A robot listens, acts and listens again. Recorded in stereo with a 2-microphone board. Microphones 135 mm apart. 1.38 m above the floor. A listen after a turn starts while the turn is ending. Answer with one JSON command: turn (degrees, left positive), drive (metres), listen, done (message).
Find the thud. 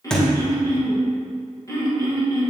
{"turn": 30}
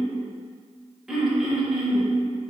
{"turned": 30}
{"listen": true}
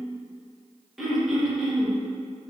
{"done": "I heard a thud, but can't make it out now. It was about 25° right or 145° left."}